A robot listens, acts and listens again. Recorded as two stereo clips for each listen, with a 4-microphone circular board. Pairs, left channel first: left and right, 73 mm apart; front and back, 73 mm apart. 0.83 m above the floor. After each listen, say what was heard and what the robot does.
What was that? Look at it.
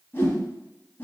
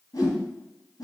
The whoosh: 25° left. Turn 25° left.
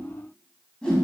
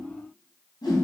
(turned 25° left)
The whoosh is now 10° left. Turn 10° left.
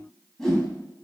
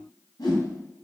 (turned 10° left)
Found it: a whoosh, straight ahead.